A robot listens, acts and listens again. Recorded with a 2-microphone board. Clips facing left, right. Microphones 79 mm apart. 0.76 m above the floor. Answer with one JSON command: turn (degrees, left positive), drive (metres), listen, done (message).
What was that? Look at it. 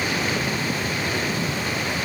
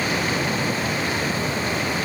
{"listen": true}
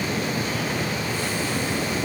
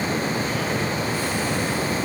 {"listen": true}
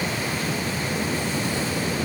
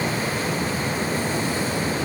{"done": "I can't make out anything to turn to."}